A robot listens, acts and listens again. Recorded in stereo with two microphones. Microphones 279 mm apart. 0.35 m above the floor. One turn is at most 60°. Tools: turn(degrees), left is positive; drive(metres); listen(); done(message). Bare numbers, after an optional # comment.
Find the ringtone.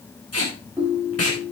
turn(-30)
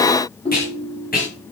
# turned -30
# So it is at 20° left.
turn(20)
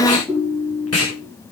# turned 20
done("Found it: a ringtone, straight ahead.")